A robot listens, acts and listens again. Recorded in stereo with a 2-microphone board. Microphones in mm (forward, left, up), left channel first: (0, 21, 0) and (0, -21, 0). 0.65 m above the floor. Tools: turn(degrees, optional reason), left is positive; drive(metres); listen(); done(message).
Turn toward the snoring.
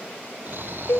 turn(degrees=-55, reason="The snoring: about 55° right or 125° right.")
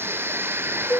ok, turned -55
turn(degrees=-65, reason="So it is at 65° right.")
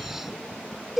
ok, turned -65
done("Found it: snoring, straight ahead.")